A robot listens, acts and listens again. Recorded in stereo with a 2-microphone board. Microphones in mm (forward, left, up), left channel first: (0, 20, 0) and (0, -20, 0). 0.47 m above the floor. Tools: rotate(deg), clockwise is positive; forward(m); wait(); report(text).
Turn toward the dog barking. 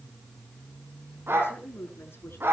rotate(90)
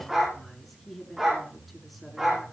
rotate(15)
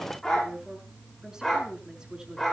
report("Found it: a dog barking, straight ahead.")